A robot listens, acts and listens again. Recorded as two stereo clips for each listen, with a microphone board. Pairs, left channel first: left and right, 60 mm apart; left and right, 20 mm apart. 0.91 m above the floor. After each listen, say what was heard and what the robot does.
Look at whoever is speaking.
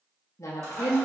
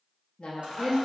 The woman speaking: about 60° left or 120° left. Turn 60° left.
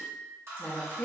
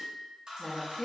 So it is at 30° left. Turn 30° left.
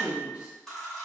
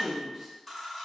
The woman speaking is now 25° right. Turn 25° right.
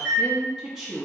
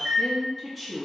The woman speaking is now 10° right. Turn 10° right.
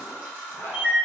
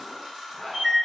Keep listening.
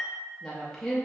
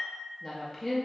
Facing the woman speaking.